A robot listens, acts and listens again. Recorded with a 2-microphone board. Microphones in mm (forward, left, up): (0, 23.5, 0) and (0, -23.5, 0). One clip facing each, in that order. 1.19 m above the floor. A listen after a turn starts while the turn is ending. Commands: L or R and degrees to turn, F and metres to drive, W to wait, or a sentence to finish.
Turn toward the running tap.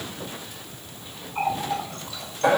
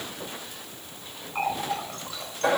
R35
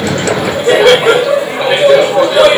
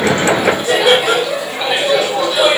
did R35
W
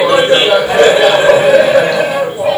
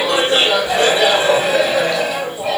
W
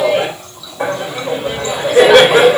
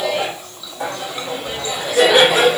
I heard a running tap, but can't make it out now. It was about straight ahead or 110° right.